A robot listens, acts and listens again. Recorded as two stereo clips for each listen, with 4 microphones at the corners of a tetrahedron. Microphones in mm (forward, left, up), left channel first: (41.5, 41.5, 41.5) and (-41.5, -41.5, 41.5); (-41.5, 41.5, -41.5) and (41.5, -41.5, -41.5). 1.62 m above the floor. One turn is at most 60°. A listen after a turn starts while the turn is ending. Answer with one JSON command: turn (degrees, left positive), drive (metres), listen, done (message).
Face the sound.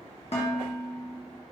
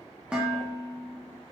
{"turn": 35}
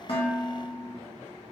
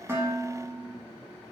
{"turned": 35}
{"done": "Facing the dishes clattering, 1 to 2 m away."}